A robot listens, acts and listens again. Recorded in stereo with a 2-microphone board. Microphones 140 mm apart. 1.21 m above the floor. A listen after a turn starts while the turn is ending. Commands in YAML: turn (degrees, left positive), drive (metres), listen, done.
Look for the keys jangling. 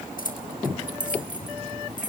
turn: 65
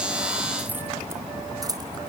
turn: -25
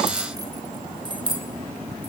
turn: -35
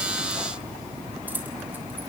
listen: true
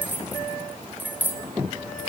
turn: -15
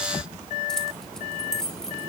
done: "Found it: keys jangling, straight ahead."